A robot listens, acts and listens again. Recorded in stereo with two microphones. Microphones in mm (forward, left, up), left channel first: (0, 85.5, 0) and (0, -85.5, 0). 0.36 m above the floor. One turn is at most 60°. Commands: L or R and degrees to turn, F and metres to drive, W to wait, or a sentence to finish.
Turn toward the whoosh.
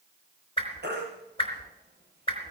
L30
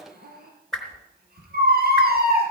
Found it: a whoosh, straight ahead, 2 to 4 m away.